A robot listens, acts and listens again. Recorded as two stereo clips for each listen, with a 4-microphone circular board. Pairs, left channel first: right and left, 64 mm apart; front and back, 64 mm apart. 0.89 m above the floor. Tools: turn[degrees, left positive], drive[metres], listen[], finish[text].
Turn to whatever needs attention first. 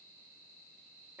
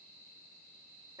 Action: listen[]
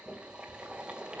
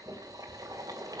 Action: listen[]
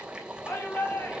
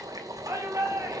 Thought: The shout: 140° right.
Action: turn[-140]
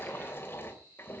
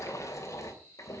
Action: listen[]
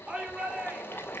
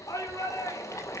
Thought: The shout is now 20° left.
Action: turn[20]
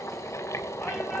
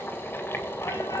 Action: listen[]
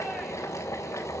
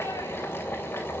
Action: listen[]
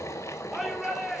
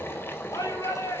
Action: finish[Facing the shout, 2 to 4 m away.]